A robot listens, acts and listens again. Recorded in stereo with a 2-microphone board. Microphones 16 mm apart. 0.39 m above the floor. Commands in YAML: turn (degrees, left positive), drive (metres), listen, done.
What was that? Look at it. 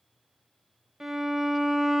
turn: -20
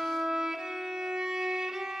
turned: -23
turn: -140
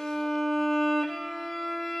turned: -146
done: "Found it: a violin, straight ahead, under 1 m away."